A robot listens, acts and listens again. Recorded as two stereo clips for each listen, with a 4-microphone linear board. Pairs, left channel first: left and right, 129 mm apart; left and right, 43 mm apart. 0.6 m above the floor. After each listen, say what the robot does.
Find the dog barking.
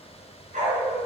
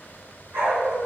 Turn 75° right.
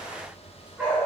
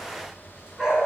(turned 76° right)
Turn 10° right.
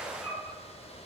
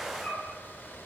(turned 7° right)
Facing the dog barking, 2 to 4 m away.